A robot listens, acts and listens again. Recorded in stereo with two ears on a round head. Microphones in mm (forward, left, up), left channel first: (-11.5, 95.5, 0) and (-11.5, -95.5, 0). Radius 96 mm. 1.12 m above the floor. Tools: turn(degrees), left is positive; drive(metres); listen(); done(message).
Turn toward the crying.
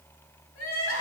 turn(degrees=75)
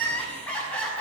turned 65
done("Found it: crying, straight ahead, over 4 m away.")